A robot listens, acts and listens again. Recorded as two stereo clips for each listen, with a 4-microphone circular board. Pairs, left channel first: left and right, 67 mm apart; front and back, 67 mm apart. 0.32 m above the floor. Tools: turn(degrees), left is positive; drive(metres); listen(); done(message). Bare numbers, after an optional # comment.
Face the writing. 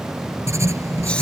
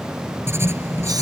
# The writing: 130° right.
turn(-130)
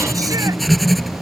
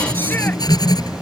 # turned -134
done("Found it: writing, straight ahead.")